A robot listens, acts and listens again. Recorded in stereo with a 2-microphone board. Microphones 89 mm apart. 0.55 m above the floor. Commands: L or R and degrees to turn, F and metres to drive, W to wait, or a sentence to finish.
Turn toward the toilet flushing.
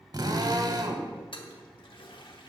L70
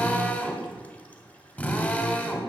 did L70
W
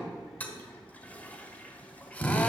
L20
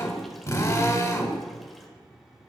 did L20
W
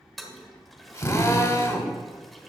Found it: a toilet flushing, straight ahead, 1 to 2 m away.